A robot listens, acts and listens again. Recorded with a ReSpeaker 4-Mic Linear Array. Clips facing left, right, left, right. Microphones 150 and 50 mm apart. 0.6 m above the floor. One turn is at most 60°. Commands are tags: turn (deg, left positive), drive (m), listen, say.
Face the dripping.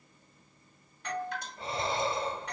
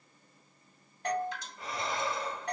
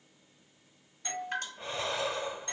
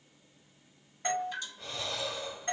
<turn deg="60"/>
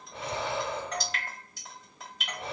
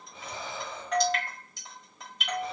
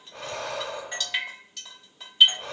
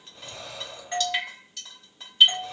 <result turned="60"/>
<say>Facing the dripping.</say>